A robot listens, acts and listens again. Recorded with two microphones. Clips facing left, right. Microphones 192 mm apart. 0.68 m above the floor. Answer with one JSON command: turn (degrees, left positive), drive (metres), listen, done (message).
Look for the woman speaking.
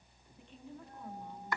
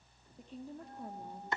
{"turn": -35}
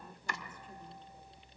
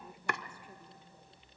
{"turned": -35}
{"turn": -10}
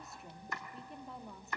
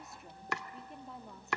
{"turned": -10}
{"done": "Facing the woman speaking, 1 to 2 m away."}